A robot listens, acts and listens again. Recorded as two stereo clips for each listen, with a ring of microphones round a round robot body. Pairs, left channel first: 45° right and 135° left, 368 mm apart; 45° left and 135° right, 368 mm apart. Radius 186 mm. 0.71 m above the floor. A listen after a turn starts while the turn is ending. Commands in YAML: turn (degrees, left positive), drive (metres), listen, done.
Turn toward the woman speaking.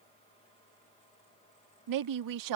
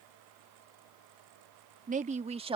turn: 150
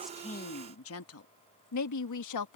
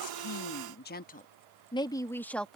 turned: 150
turn: -40
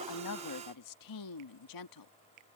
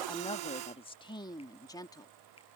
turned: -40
turn: -35
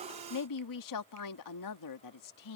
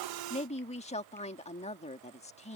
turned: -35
turn: -25
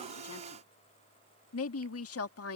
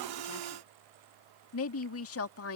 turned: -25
done: "Facing the woman speaking."